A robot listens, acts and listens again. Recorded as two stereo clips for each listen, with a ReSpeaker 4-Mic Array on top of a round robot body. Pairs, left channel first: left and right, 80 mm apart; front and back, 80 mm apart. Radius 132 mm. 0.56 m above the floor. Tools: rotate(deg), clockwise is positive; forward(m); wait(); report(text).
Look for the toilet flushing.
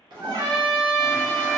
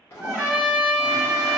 rotate(60)
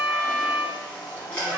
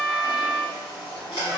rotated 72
rotate(-15)
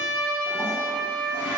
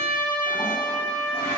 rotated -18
wait()
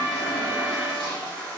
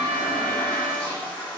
report("Facing the toilet flushing, 1 to 2 m away.")